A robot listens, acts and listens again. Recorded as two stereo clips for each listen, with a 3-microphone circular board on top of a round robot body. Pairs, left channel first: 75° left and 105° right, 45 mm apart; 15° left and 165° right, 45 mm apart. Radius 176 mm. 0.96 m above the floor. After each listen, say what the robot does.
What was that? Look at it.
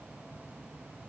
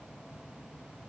Keep listening.
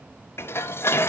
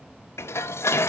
Turn 40° left.
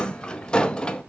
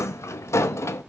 Facing the dishes clattering.